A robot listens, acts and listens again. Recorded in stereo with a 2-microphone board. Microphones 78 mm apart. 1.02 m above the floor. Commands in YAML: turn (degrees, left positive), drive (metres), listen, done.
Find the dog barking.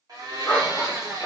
turn: 30
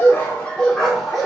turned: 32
turn: 30
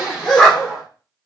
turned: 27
turn: 30
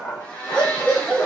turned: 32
turn: 30
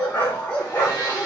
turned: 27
turn: 150
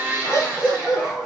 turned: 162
turn: -10
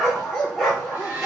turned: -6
done: "Found it: a dog barking, straight ahead, 2 to 4 m away."